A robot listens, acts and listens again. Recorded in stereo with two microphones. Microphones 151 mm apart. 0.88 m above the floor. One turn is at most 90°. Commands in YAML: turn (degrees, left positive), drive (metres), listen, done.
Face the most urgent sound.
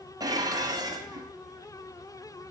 listen: true
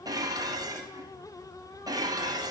listen: true
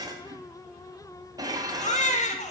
turn: 50
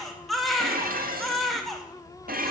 done: "Found it: a baby crying, straight ahead."